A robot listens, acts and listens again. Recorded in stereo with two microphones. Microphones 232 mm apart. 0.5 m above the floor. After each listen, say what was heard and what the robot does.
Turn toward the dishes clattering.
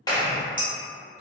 The dishes clattering: about 60° right or 120° right. Turn 60° right.
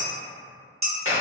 So it is at 50° right. Turn 50° right.
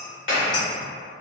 Keep listening.
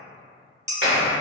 The dishes clattering is now 15° right. Turn 15° right.
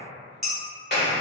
Facing the dishes clattering.